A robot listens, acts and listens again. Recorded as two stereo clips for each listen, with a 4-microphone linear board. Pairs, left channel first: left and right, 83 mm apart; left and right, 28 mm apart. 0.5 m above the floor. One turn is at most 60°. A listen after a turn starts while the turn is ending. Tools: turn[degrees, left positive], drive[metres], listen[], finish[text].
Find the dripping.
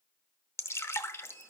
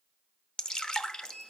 Thought: The dripping: about 30° left or 150° left.
Action: turn[30]
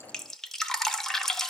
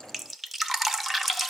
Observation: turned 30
Action: finish[Found it: dripping, straight ahead.]